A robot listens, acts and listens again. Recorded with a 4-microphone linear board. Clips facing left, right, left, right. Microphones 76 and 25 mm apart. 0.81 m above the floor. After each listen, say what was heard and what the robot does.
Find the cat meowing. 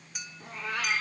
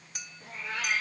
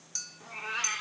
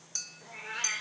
The cat meowing: about 75° left or 105° left. Turn 75° left.
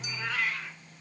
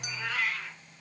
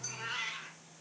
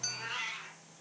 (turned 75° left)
Found it: a cat meowing, straight ahead.